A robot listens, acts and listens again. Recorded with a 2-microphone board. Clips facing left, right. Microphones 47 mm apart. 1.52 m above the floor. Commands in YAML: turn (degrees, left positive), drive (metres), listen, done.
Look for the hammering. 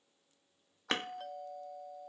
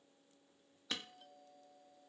turn: 50
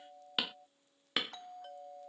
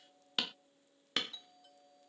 turn: 10
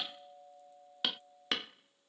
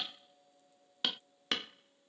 done: "Facing the hammering."